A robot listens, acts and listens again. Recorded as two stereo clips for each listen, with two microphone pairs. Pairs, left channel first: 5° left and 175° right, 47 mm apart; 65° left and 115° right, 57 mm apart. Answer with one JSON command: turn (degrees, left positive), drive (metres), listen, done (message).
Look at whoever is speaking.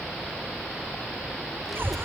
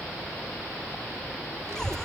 {"turn": -90}
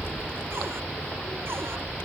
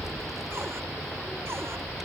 {"turn": -30}
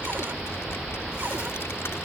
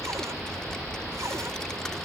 {"turn": -10}
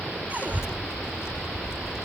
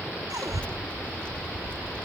{"done": "Found it: a child speaking, straight ahead."}